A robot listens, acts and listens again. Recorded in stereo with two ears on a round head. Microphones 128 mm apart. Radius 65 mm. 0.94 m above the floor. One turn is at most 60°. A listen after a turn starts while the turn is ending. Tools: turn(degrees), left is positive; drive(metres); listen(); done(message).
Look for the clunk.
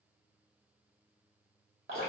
listen()
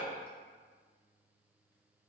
listen()
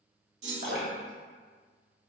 turn(degrees=-50)
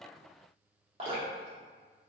listen()
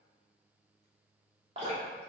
done("I heard a clunk, but can't make it out now. It was about straight ahead or 80° right.")